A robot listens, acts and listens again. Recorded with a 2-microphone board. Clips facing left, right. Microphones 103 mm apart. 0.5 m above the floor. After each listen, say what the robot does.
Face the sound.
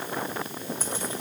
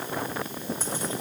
Turn 30° right.
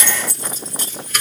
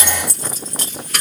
Turn 110° right.
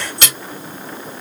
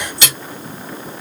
Turn 55° left.
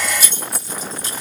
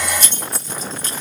Turn 15° left.
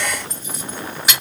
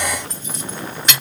Facing the keys jangling, 2 to 4 m away.